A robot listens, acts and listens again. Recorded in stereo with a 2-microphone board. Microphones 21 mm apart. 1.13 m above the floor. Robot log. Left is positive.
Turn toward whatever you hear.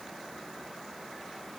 cmd idle
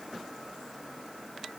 cmd idle
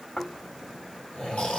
note: The snoring: about 65° left or 115° left.
cmd yaw +65
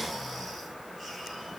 note: So it is at 10° left.
cmd yaw +10
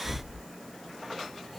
end: Facing the snoring.